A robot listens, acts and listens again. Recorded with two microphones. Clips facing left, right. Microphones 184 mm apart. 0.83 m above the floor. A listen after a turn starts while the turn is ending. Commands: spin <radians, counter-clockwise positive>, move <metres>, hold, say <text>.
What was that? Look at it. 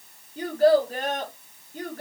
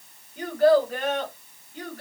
spin 0.87
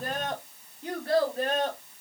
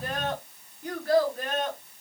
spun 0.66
spin 0.52
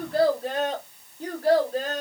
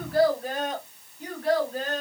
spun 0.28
spin 0.70
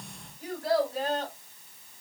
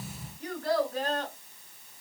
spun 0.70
spin 0.17
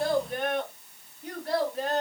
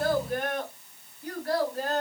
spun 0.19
say Facing the child speaking, 2 to 4 m away.